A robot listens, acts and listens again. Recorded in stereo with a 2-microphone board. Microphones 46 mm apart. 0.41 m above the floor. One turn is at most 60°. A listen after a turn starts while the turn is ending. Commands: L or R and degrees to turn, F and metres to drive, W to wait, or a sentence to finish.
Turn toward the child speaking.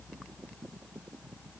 W
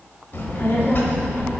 L50
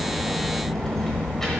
L10
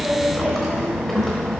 Found it: a child speaking, straight ahead, under 1 m away.